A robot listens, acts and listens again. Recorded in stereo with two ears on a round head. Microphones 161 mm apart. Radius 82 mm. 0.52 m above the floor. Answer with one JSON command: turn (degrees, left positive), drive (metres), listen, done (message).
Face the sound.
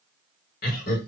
{"turn": 50}
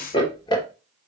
{"turn": 25}
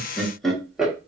{"done": "Found it: laughter, straight ahead, 1 to 2 m away."}